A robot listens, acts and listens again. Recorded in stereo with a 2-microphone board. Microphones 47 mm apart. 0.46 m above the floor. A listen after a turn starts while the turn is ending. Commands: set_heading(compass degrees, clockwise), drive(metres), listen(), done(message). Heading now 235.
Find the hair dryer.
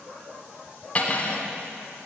listen()
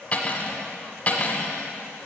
listen()
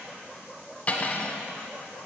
done("I can't make out a hair dryer to turn to.")